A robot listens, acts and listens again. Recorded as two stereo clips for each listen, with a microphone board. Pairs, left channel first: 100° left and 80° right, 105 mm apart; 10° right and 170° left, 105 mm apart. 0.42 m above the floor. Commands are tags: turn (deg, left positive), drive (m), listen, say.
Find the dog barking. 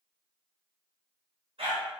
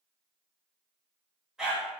<turn deg="-110"/>
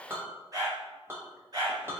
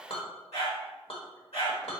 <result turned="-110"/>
<turn deg="-30"/>
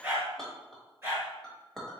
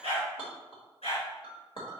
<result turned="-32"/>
<turn deg="-10"/>
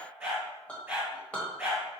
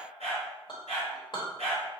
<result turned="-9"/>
<say>Found it: a dog barking, straight ahead.</say>